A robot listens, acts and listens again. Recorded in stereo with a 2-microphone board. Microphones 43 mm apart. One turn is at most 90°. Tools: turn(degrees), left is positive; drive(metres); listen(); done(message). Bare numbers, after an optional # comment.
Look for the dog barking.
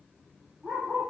# The dog barking: about 45° right or 135° right.
turn(-45)
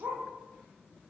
# So it is at 95° right.
turn(-90)
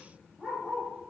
done("Found it: a dog barking, straight ahead, over 4 m away.")